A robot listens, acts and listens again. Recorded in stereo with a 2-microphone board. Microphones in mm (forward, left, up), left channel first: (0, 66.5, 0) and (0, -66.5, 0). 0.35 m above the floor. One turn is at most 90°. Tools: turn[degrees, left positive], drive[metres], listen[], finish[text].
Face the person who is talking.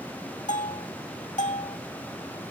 Action: listen[]
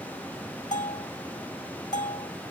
Action: listen[]
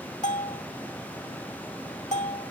Action: finish[I can't make out anyone speaking, only a bell.]